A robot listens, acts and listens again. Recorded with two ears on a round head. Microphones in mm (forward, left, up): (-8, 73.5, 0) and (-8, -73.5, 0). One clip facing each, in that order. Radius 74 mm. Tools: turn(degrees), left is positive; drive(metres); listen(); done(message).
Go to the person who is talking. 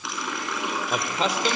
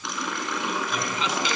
turn(degrees=35)
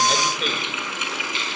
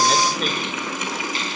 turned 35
listen()
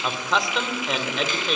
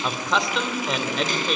drive(metres=1.0)
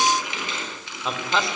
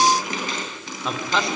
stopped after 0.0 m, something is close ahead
done("Something is in my way. I am facing the man speaking but have not reached it.")